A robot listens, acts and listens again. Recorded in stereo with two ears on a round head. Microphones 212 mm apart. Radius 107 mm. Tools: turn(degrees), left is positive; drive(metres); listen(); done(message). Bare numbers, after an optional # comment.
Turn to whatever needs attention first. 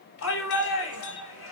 # The shout: about 60° left or 120° left.
turn(60)
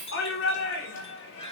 # So it is at 55° left.
turn(55)
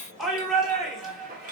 done("Found it: a shout, straight ahead.")